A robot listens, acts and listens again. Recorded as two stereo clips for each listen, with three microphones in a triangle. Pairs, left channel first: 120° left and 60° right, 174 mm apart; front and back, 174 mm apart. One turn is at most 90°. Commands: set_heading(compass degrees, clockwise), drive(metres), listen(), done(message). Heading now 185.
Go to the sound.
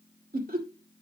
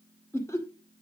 set_heading(255)
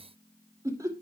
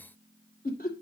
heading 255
drive(1.0)
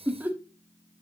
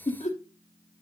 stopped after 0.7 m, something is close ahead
set_heading(240)
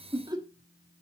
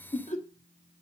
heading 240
done("Arrived at the laughter, straight ahead.")